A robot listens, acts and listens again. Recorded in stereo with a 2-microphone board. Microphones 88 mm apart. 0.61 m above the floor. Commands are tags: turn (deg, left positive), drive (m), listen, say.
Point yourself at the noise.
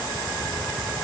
<listen/>
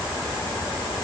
<listen/>
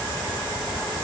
<say>I can't make out anything.</say>